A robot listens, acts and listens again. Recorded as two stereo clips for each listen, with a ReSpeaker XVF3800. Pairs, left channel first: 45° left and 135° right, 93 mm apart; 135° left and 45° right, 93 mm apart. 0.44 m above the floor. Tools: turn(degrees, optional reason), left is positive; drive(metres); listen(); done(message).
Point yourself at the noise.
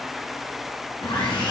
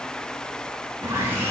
turn(degrees=15, reason="The sawing: 15° left.")
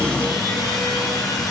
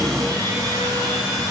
done("Found it: sawing, straight ahead, 2 to 4 m away.")